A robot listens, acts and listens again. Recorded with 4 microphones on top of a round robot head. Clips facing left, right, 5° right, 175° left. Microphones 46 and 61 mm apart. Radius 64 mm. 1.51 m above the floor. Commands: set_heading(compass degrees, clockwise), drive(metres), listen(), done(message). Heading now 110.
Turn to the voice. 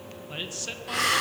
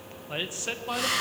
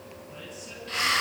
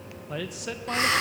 set_heading(260)
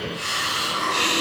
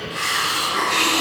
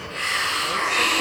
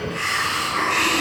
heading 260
listen()
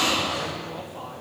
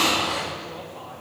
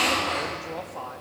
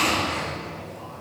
set_heading(250)
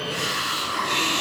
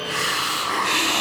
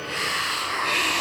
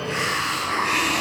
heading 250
listen()
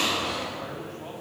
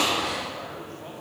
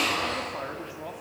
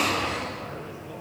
done("Facing the man speaking, over 4 m away.")